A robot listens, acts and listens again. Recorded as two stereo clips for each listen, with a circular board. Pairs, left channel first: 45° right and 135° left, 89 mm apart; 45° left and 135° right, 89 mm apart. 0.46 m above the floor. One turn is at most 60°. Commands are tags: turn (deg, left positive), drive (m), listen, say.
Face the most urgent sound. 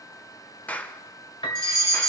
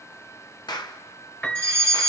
<turn deg="60"/>
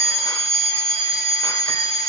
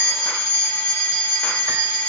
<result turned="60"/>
<turn deg="60"/>
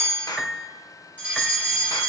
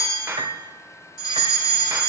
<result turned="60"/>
<turn deg="60"/>
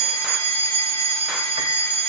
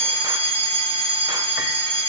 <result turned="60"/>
<say>Found it: a fire alarm, straight ahead, 2 to 4 m away.</say>